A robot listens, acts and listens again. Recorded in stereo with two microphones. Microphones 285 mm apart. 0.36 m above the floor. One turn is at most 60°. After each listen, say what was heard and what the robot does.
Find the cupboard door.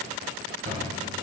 The cupboard door: about 50° right or 130° right. Turn 50° right.
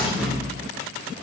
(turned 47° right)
Facing the cupboard door.